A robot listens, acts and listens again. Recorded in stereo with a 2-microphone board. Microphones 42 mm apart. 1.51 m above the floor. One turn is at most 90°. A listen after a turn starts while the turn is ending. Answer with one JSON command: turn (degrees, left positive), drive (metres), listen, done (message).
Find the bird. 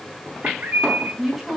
{"turn": -45}
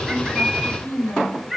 {"done": "Found it: a bird, straight ahead, 2 to 4 m away."}